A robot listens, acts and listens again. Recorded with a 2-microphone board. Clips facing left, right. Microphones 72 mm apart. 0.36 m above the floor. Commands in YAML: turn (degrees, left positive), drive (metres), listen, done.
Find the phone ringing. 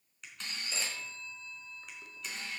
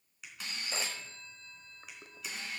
turn: -45
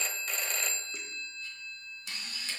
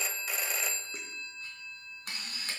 turn: -10
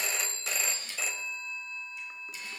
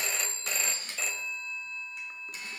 done: "Facing the phone ringing."